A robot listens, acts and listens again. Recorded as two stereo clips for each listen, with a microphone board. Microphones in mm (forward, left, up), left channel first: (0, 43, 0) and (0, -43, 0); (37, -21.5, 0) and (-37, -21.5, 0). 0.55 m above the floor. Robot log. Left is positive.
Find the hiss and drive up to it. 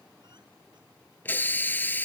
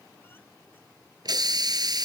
note: The hiss: 155° left.
cmd yaw +155
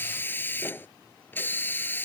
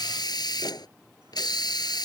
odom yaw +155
note: The hiss is now 25° left.
cmd yaw +25
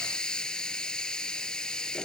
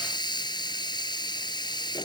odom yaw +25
note: The hiss is now 10° left.
cmd yaw +10
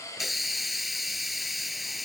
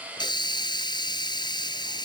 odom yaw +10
cmd fwd 1.0
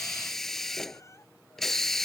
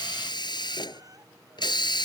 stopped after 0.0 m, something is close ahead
end: Something is in my way. I am facing the hiss but have not reached it.